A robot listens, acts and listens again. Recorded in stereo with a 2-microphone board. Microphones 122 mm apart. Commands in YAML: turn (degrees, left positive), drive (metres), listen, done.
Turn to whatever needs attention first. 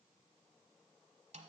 listen: true
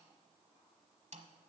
listen: true
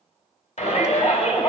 turn: 65
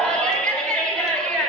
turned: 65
turn: 10
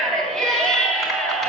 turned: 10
done: "Found it: a shout, straight ahead."